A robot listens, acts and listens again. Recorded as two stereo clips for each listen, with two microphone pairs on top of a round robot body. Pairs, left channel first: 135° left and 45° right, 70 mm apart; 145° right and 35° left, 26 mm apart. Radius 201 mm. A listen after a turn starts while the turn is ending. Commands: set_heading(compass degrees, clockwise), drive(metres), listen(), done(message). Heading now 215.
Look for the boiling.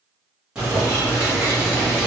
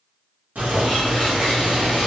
set_heading(185)
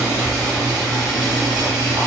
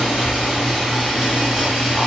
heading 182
done("Found it: boiling, straight ahead.")